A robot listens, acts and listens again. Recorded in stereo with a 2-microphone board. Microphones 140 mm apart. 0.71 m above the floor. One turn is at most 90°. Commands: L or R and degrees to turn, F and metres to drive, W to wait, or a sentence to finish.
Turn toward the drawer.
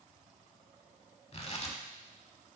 W
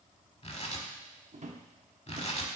R55
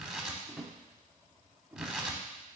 Facing the drawer, 1 to 2 m away.